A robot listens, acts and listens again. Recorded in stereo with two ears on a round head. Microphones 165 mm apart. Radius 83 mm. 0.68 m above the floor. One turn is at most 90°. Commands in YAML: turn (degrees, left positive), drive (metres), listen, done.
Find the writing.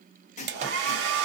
turn: 40
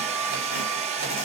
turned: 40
listen: true
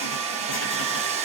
listen: true
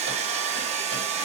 done: "I heard writing, but can't make it out now. It was about straight ahead or 100° left."